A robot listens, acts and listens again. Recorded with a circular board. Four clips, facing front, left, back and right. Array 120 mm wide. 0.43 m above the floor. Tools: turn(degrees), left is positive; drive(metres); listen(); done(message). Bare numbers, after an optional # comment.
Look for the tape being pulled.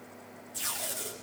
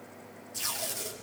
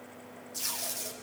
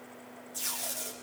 # The tape being pulled: 80° left.
turn(80)
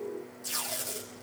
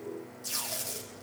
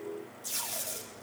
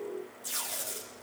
# The tape being pulled is now 25° left.
turn(25)
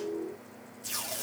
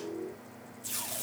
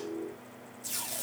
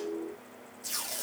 done("Facing the tape being pulled, over 4 m away.")